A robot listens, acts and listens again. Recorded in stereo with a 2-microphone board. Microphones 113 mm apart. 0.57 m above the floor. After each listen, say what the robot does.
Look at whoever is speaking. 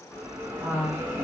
Turn 30° left.
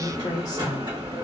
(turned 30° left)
Turn 135° left.
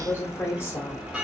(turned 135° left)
Turn 25° left.
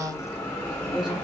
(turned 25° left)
Turn 10° right.
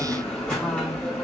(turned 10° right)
Keep listening.
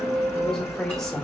Keep listening.
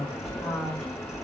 Found it: a woman speaking, straight ahead.